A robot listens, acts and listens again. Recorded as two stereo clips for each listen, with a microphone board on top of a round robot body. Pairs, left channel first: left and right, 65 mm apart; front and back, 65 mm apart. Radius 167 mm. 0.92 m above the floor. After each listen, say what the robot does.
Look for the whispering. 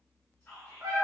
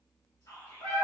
Turn 20° left.
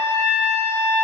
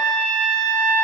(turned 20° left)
Keep listening.
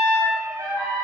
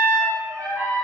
Keep listening.
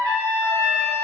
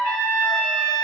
I heard whispering from this way, but can't make it out now.